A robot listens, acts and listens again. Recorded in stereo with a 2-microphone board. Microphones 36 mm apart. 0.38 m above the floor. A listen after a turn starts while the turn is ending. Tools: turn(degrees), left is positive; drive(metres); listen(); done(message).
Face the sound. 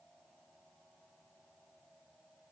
listen()
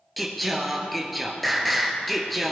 turn(degrees=30)
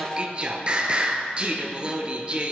turn(degrees=-30)
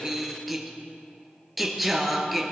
done("Found it: singing, straight ahead, 1 to 2 m away.")